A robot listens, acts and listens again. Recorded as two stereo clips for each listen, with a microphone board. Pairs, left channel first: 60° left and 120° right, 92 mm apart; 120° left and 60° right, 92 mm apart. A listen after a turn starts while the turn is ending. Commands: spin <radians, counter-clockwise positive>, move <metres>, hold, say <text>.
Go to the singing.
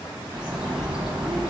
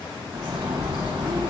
hold
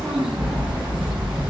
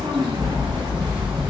hold
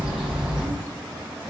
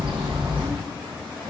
say I can't make out singing, only a bird.